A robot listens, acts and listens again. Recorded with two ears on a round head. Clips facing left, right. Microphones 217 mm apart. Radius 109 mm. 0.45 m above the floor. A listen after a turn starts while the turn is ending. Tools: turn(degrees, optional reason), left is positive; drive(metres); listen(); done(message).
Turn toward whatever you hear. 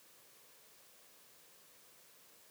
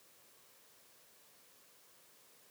listen()
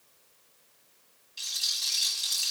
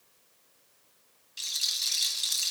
turn(degrees=-25, reason="The rattle: about 25° right or 155° right.")
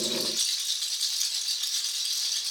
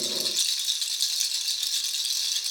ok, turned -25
turn(degrees=-130, reason="So it is at 130° right.")
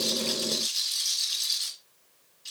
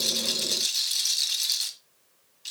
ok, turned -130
turn(degrees=-70, reason="The rattle is now 70° right.")
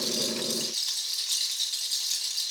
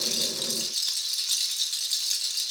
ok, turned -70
turn(degrees=-20, reason="The rattle is now 20° right.")
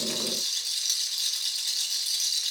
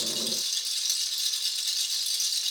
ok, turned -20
done("Facing the rattle, 1 to 2 m away.")